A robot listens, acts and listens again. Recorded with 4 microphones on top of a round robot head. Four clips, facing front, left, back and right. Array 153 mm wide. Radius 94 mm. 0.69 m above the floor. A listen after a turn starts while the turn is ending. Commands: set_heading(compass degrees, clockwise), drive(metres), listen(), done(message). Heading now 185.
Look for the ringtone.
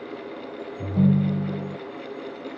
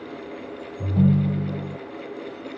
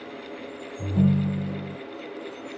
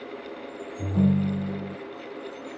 set_heading(290)
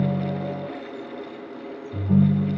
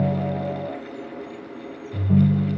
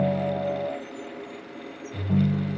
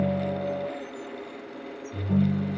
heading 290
set_heading(300)
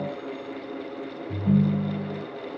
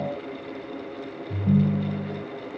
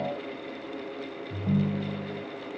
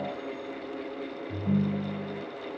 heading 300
done("Facing the ringtone, 2 to 4 m away.")